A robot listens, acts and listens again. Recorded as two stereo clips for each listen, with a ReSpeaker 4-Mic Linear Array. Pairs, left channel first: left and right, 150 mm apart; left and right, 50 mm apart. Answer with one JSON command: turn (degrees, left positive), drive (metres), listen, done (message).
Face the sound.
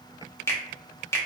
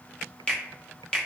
{"turn": 15}
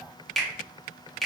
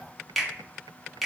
{"done": "Facing the finger snap."}